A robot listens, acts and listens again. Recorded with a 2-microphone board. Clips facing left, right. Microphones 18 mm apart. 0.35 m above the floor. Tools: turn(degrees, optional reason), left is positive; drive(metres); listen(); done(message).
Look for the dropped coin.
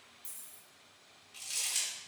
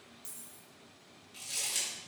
turn(degrees=-35, reason="The dropped coin: about 35° right or 145° right.")
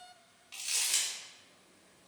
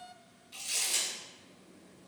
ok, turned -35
listen()
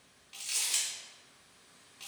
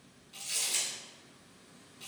done("I heard a dropped coin, but can't make it out now. It was about straight ahead or 110° right.")